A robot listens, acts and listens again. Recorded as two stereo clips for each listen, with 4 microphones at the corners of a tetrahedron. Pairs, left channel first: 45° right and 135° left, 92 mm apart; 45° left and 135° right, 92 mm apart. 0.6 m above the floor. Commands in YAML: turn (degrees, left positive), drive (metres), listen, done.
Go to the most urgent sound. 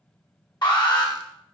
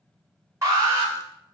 turn: -80
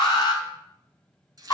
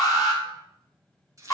drive: 1.0
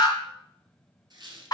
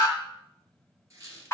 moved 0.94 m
turn: -10
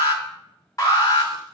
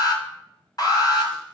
drive: 1.0
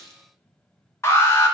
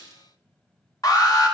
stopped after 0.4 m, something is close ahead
turn: 10
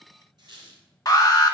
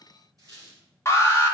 done: "I am next to the alarm."